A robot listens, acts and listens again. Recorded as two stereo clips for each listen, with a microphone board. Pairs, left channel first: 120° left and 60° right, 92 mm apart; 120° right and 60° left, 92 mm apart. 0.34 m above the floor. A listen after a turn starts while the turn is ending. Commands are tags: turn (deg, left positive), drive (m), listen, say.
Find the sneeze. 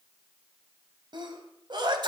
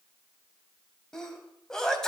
<turn deg="-35"/>
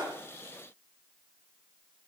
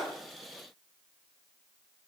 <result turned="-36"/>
<say>I heard a sneeze from this way, but can't make it out now.</say>